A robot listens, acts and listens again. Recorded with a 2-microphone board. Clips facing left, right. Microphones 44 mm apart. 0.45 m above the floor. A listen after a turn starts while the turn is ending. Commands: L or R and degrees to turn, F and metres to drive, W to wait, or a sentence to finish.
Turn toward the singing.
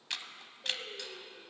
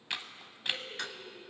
L70
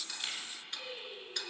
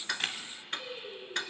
Found it: singing, straight ahead.